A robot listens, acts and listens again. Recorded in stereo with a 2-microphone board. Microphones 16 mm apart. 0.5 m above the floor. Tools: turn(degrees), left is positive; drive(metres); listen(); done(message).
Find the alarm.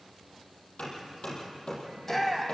listen()
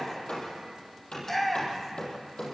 listen()
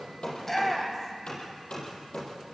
done("I can't make out an alarm to turn to.")